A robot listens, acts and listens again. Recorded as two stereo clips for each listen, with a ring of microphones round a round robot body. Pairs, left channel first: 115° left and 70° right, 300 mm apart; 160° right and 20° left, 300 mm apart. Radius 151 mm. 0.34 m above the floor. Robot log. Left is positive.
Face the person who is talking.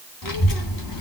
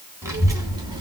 note: The child speaking: 100° left.
cmd yaw +100
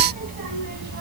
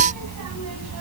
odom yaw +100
note: The child speaking is now 15° right.
cmd yaw -15
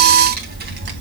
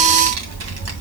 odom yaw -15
note: The child speaking is now 15° right.
cmd yaw -15
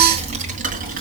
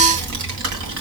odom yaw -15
end: Found it: a child speaking, straight ahead, 2 to 4 m away.